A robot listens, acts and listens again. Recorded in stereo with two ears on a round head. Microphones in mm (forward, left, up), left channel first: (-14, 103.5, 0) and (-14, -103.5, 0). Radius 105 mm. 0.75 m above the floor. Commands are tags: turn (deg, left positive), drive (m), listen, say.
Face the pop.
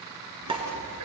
<turn deg="-20"/>
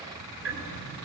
<listen/>
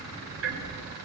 <say>I heard a pop, but can't make it out now. It was about straight ahead or 140° right.</say>